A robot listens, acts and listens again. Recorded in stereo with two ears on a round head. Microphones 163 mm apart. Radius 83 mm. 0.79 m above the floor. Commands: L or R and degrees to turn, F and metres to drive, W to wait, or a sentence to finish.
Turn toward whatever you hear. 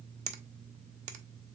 R40
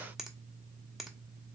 Found it: a finger snap, straight ahead, under 1 m away.